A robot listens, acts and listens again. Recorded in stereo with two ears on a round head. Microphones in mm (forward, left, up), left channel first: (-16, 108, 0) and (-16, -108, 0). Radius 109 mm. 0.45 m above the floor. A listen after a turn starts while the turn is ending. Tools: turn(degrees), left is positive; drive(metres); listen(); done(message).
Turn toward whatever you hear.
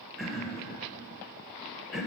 turn(degrees=30)
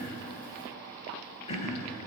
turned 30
turn(degrees=150)
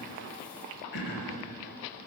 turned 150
turn(degrees=50)
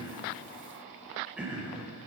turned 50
done("Found it: throat clearing, straight ahead, under 1 m away.")